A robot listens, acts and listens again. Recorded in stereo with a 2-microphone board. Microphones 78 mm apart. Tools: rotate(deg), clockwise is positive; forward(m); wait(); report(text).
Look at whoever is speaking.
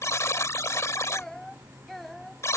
rotate(-30)
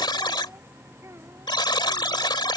rotate(35)
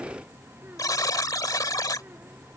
wait()
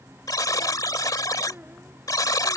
rotate(25)
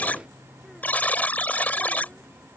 wait()
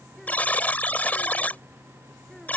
wait()
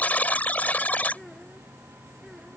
report("Found it: a child speaking, straight ahead.")